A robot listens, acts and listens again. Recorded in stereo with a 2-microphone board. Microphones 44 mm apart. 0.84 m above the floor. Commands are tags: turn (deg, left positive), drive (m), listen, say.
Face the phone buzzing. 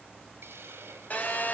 <turn deg="35"/>
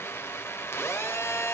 <turn deg="110"/>
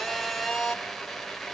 <say>Found it: a phone buzzing, straight ahead.</say>